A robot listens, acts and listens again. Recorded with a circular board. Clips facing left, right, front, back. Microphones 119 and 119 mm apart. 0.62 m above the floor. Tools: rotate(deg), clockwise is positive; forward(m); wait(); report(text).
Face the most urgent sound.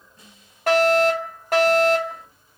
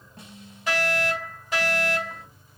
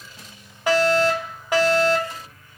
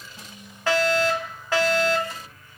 rotate(-75)
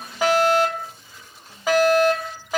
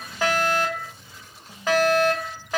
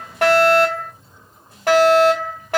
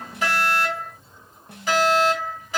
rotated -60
rotate(-10)
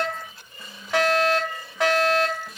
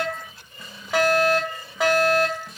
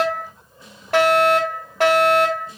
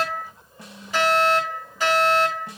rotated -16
report("Found it: a fire alarm, straight ahead.")